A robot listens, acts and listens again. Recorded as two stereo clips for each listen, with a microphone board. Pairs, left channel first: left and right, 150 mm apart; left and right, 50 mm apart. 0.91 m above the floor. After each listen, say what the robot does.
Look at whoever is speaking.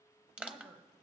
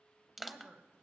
Turn 75° right.
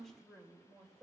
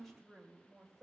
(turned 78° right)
Facing the woman speaking.